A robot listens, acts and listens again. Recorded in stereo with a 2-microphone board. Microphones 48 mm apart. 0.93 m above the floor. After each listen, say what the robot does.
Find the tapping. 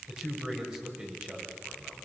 Keep listening.
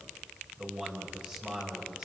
Keep listening.
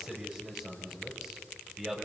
I can't make out tapping, only a man speaking.